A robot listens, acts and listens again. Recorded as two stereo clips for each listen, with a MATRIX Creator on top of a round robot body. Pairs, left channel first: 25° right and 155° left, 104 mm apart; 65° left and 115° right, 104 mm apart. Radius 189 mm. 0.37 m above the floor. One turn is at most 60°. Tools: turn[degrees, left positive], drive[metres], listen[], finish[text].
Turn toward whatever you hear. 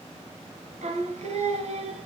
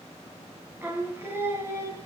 Thought: The singing: 175° right.
Action: turn[-60]
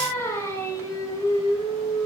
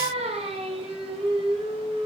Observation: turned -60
Thought: The singing is now 75° right.
Action: turn[-60]
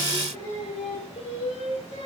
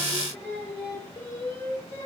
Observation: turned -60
Action: finish[Facing the singing.]